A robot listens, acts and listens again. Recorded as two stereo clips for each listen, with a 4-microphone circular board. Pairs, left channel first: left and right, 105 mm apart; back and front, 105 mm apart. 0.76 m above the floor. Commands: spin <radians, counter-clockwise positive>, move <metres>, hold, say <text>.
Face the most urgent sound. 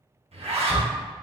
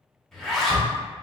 spin -2.36
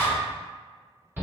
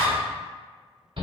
spin -0.35
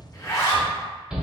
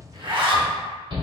spin -0.17
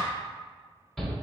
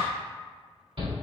say Facing the shout, 1 to 2 m away.